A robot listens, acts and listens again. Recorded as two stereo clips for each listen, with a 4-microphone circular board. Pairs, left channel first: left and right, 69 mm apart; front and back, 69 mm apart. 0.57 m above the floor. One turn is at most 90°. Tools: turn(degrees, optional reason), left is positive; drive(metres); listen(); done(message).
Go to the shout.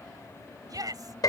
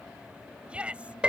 turn(degrees=-90, reason="The shout: 110° right.")
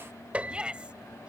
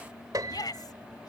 turn(degrees=-15, reason="The shout is now 15° right.")
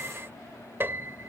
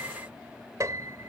listen()
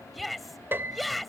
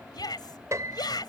drive(metres=1.0)
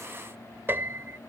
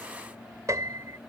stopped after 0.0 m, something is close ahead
listen()
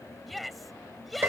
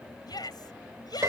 done("Blocked. The shout is further on, straight ahead.")